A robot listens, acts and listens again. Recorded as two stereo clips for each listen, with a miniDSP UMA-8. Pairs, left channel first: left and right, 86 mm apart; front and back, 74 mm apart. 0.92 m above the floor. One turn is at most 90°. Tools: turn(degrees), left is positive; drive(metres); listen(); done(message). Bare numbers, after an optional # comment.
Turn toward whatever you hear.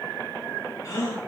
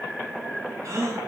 # The gasp: 135° left.
turn(90)
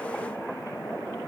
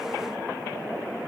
# Nothing new. It was at 45° left.
turn(45)
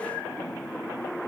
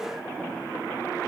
done("Facing where the gasp came from. I can't hear it now.")